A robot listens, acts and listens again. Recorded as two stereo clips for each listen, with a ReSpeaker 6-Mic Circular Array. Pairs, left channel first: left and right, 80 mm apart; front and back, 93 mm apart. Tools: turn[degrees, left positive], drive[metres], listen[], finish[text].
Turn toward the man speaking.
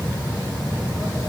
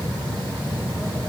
Action: listen[]
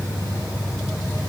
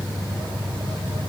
Action: listen[]
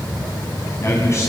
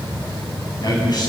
Thought: The man speaking: 40° left.
Action: turn[40]
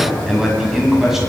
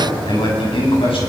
Action: finish[Found it: a man speaking, straight ahead, over 4 m away.]